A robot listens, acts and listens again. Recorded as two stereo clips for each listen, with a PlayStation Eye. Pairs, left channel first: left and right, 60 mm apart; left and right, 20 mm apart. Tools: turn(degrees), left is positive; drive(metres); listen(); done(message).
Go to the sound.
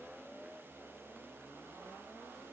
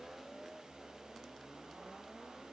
listen()
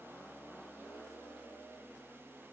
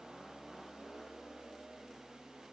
listen()
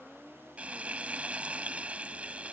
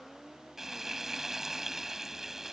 turn(degrees=-25)
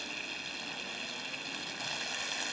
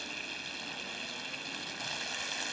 drive(metres=1.0)
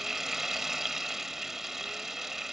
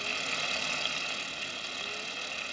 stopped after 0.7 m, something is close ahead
turn(degrees=-10)
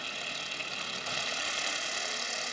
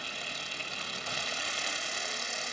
done("Arrived at the frying, straight ahead.")